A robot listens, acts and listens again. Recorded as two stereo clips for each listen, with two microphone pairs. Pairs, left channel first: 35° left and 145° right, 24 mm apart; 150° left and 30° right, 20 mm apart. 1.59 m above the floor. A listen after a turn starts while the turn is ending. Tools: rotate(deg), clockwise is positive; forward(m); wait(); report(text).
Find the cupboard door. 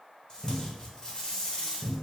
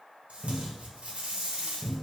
rotate(65)
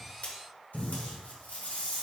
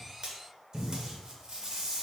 report("Facing the cupboard door, 1 to 2 m away.")